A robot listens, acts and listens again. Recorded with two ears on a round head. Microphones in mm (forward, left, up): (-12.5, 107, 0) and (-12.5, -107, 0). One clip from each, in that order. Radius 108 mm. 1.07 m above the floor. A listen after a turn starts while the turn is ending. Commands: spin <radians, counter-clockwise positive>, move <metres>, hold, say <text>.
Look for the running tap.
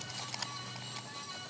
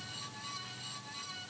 hold
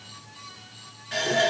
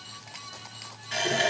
spin -0.52
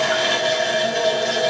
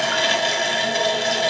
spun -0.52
spin -2.53
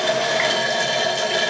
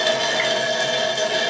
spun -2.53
say Found it: a running tap, straight ahead, 2 to 4 m away.